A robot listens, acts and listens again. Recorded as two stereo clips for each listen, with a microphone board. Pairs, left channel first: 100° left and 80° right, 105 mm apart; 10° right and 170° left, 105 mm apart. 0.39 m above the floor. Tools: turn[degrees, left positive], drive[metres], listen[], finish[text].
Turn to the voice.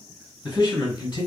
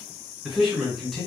Thought: The man speaking: 75° left.
Action: turn[75]
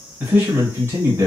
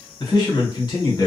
Thought: The man speaking is now 35° right.
Action: turn[-35]
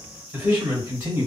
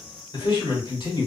Thought: The man speaking is now 20° right.
Action: turn[-20]
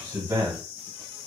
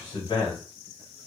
Thought: The man speaking is now 15° right.
Action: turn[-15]
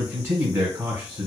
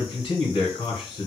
Thought: The man speaking is now 10° right.
Action: turn[-10]
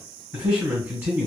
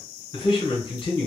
Action: finish[Facing the man speaking, 1 to 2 m away.]